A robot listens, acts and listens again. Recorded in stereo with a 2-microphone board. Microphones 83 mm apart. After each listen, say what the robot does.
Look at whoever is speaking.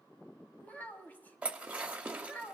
Turn 20° left.
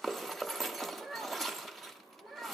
Facing the child speaking.